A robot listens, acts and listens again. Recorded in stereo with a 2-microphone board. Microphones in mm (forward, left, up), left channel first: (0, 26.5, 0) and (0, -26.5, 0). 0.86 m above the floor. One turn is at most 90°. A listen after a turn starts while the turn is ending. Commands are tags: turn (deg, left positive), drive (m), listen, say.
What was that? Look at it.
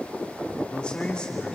<turn deg="15"/>
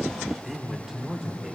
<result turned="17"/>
<turn deg="-10"/>
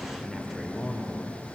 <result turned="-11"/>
<say>Found it: a man speaking, straight ahead.</say>